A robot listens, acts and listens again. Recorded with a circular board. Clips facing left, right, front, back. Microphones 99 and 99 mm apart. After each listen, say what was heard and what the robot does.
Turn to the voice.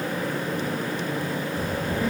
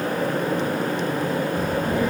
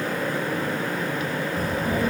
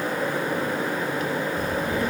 The child speaking: 50° right. Turn 50° right.
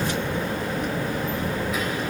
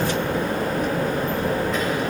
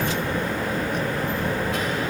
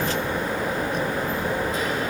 The child speaking is now 10° left. Turn 10° left.
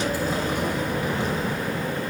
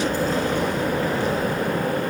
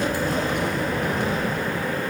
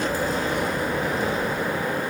The child speaking is now 20° left. Turn 20° left.
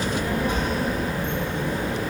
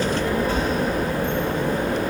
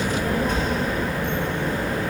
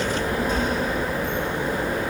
The child speaking is now 20° left. Turn 20° left.
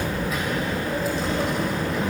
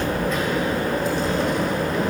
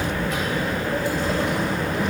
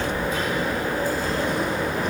Found it: a child speaking, straight ahead, 2 to 4 m away.